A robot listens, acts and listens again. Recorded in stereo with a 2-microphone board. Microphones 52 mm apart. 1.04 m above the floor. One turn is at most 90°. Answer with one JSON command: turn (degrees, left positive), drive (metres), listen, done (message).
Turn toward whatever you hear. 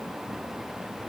{"listen": true}
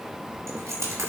{"turn": -70}
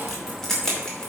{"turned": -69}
{"turn": 15}
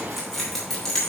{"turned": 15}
{"turn": 10}
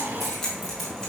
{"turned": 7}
{"turn": 10}
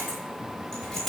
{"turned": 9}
{"done": "Found it: keys jangling, straight ahead, 2 to 4 m away."}